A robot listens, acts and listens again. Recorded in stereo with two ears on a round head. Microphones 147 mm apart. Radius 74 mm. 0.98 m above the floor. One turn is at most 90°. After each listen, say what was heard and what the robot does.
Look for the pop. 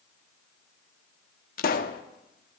The pop: about 55° left or 125° left. Turn 55° left.
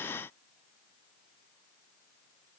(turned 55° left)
Keep listening.
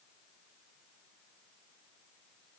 I heard a pop, but can't make it out now. It was about straight ahead or 70° left.